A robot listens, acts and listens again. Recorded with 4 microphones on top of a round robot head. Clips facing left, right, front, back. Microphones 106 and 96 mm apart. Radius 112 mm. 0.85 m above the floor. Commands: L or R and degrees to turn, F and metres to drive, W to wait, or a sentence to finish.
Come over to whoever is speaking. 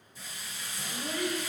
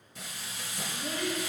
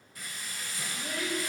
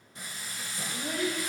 L120
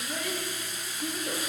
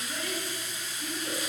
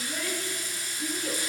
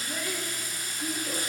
F1.0
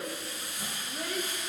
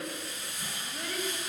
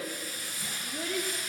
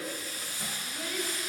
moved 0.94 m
L10
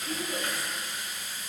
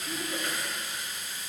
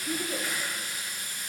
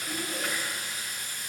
F1.0
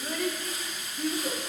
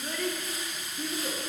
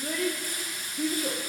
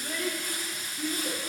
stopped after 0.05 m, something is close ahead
I am next to the child speaking.